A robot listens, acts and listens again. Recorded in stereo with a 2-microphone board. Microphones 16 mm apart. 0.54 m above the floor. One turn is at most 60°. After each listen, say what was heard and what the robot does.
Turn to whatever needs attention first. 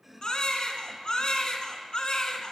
The baby crying: about 50° left or 130° left. Turn 50° left.
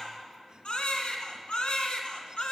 So it is at 85° left. Turn 60° left.
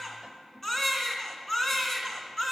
The baby crying is now 15° left. Turn 15° left.
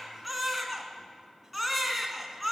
Found it: a baby crying, straight ahead, 1 to 2 m away.